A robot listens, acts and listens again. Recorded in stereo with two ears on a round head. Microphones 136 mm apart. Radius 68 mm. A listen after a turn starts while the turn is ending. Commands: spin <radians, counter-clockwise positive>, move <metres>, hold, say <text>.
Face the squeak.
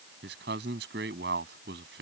hold
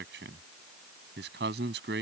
hold
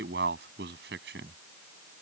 say I can't make out a squeak to turn to.